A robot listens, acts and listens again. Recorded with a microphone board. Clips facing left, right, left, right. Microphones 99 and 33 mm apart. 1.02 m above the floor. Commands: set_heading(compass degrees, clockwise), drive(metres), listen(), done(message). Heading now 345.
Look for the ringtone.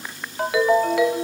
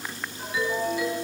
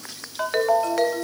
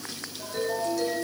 set_heading(255)
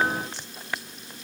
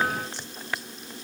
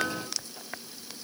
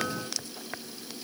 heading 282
set_heading(247)
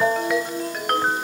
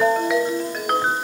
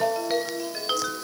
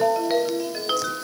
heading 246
done("Facing the ringtone.")